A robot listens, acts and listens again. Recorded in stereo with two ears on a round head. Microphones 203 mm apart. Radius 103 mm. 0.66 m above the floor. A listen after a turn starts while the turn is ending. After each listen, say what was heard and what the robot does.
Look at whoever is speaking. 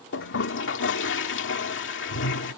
Keep listening.
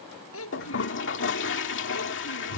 The child speaking: about 60° left or 120° left. Turn 60° left.
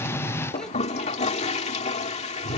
Keep listening.
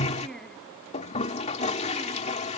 Facing the child speaking.